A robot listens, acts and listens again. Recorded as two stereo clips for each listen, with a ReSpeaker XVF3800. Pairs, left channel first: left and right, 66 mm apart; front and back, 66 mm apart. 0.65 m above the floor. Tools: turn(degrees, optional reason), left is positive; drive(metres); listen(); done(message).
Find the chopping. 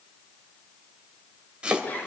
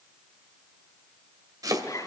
turn(degrees=-165, reason="The chopping: 165° right.")
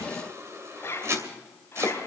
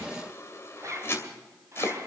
turn(degrees=-50, reason="The chopping is now 50° right.")
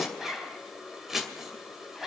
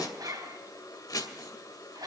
done("Facing the chopping.")